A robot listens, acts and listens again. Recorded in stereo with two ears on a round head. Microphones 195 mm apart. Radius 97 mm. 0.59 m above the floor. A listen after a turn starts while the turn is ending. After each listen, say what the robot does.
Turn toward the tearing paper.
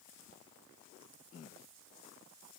Keep listening.
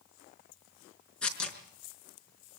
Turn 30° left.
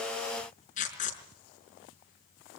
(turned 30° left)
Turn 145° left.
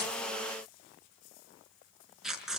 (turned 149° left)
Found it: tearing paper, straight ahead, over 4 m away.